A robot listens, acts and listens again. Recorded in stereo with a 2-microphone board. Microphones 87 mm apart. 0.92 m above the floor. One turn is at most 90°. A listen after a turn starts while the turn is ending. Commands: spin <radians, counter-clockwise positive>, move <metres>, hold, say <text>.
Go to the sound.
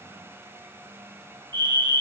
spin -0.96
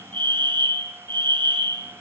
spin -1.13
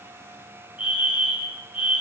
spin -0.26
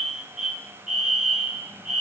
move 1.0
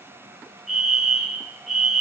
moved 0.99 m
move 1.0
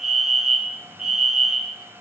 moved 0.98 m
move 1.0
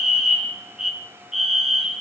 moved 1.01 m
move 1.0
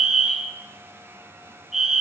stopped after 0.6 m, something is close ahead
spin -0.17
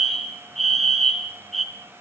say I am next to the fire alarm.